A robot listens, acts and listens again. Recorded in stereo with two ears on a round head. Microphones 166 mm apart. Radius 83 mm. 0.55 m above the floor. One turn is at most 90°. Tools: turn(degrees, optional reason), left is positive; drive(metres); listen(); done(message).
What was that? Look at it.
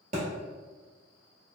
turn(degrees=-40, reason="The thud: about 40° right or 140° right.")
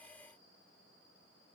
listen()
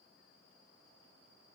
done("I heard a thud, but can't make it out now. It was about straight ahead or 100° right.")